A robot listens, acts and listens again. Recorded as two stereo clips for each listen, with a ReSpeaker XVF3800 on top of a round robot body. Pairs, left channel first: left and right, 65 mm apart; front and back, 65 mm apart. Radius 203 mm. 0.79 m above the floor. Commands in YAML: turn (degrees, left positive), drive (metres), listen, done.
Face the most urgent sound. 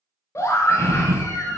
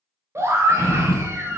turn: 135
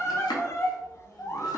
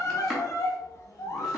turn: 45
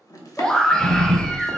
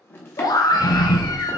turn: 10
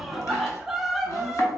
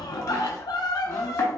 done: "Found it: a scream, straight ahead."